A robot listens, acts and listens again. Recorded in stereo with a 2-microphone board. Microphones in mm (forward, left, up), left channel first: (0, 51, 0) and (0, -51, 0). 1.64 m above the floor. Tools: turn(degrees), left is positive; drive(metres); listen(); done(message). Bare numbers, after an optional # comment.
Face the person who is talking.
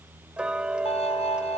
listen()
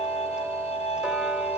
listen()
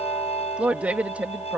turn(-30)
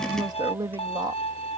# So it is at 140° right.
turn(-140)
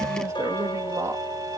# The woman speaking is now 30° right.
turn(-30)
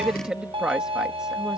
# The woman speaking is now 10° right.
turn(-10)
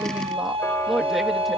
done("Facing the woman speaking.")